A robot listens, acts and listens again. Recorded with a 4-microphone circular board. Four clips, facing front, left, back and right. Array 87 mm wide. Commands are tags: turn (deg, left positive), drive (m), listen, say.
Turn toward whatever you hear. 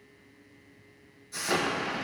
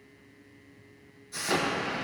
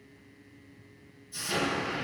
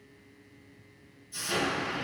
<turn deg="40"/>
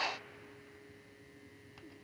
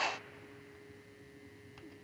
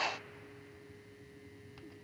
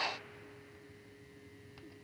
<say>Facing where the explosion came from. I can't hear it now.</say>